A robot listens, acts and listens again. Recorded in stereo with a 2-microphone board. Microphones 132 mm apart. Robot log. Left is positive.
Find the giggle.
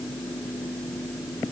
cmd idle
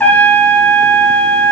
cmd idle
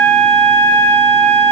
end: I can't make out a giggle to turn to.